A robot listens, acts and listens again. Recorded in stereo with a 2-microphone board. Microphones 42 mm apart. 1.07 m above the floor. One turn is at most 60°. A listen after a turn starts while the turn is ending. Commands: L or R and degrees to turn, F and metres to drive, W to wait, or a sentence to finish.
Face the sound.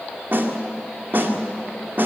R50
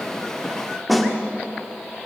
Facing the snare drum.